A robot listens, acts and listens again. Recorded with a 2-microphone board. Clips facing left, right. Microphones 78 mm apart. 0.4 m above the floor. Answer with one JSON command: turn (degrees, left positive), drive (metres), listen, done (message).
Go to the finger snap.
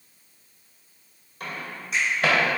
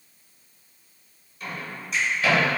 {"turn": 30}
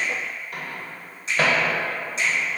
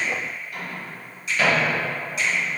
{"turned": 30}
{"turn": 145}
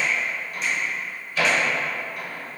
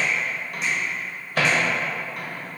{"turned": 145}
{"listen": true}
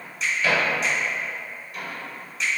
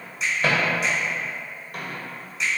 {"drive": 1.0}
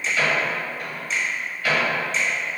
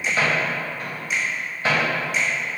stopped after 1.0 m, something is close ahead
{"turn": -15}
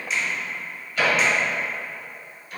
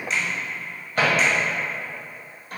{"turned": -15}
{"done": "I am next to the finger snap."}